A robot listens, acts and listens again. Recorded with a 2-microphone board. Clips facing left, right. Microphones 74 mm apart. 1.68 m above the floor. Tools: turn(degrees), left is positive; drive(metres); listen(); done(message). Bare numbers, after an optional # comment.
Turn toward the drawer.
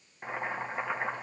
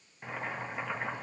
listen()
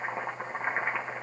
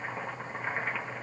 listen()
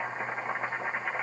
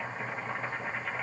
done("I can't make out a drawer, only boiling.")